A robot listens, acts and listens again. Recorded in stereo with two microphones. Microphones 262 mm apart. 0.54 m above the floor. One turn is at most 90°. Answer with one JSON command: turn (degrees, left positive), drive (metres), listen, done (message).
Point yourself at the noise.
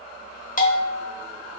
{"turn": 30}
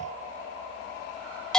{"done": "Facing the bell, under 1 m away."}